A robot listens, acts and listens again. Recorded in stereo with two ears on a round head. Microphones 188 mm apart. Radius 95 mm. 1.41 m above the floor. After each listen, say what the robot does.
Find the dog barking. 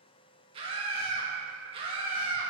Keep listening.
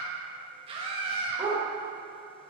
Turn 30° right.
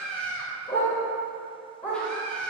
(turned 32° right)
Facing the dog barking, 2 to 4 m away.